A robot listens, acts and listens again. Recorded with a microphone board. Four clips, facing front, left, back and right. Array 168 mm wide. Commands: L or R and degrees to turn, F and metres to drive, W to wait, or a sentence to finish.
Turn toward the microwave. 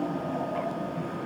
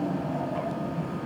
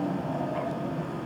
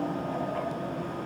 W
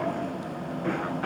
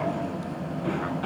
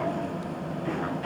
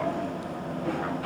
W
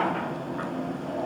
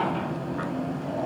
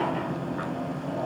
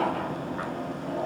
I can't make out a microwave.